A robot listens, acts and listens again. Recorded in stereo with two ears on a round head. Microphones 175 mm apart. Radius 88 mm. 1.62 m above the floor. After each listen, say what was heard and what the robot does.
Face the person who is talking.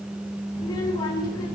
The child speaking: about 20° left or 160° left. Turn 20° left.
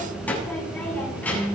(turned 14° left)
So it is at 10° left. Turn 10° left.
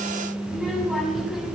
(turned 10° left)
Facing the child speaking, over 4 m away.